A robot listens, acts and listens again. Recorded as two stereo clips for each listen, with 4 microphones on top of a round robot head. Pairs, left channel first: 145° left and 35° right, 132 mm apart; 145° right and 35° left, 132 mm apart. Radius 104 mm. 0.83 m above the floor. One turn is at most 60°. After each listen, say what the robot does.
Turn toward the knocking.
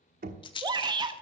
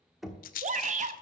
Turn 55° right.
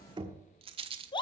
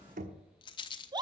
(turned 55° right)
Turn 20° left.
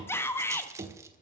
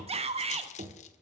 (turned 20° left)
Found it: knocking, straight ahead.